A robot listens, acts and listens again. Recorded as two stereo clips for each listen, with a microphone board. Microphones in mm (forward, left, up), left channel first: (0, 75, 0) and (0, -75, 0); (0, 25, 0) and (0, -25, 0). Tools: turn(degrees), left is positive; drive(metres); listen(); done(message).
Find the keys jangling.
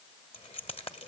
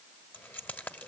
turn(degrees=40)
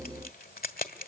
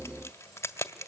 turn(degrees=95)
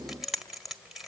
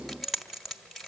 done("Found it: keys jangling, straight ahead, 1 to 2 m away.")